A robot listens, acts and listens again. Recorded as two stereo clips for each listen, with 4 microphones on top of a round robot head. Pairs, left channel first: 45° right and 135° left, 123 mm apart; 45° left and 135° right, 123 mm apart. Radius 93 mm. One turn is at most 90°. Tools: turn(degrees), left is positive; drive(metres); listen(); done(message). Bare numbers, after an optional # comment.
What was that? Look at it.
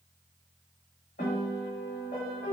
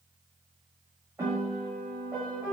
# The piano: 55° right.
turn(-55)
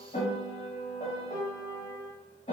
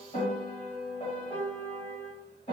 done("Facing the piano, under 1 m away.")